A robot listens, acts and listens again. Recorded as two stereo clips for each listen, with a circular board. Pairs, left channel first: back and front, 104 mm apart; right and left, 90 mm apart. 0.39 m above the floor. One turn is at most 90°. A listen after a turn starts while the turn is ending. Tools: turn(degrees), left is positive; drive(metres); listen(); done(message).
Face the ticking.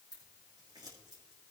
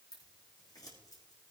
listen()
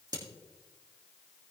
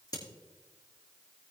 listen()
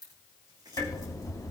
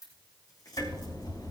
turn(degrees=-90)
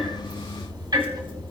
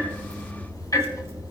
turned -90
turn(degrees=-45)
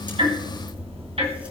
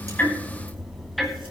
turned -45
done("Facing the ticking.")